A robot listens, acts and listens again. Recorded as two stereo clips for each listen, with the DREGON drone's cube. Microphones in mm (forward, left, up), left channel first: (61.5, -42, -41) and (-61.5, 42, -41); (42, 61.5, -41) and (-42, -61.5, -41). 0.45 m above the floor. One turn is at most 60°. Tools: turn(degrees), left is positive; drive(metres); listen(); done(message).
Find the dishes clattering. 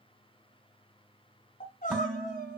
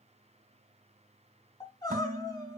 turn(degrees=-60)
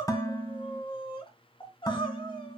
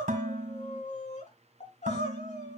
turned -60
turn(degrees=-60)
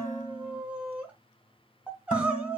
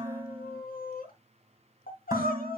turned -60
turn(degrees=-55)
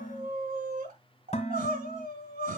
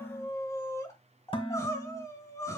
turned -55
done("Found it: dishes clattering, straight ahead, 2 to 4 m away.")